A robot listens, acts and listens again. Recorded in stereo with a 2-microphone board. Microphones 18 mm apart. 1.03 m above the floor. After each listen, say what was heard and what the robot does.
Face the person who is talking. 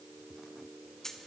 Keep listening.
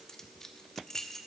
Keep listening.
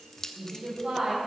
The woman speaking: about 60° right or 120° right. Turn 60° right.
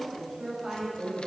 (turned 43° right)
So it is at 20° right. Turn 20° right.
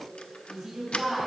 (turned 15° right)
The woman speaking is now 10° right. Turn 10° right.
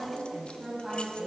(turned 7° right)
Found it: a woman speaking, straight ahead, over 4 m away.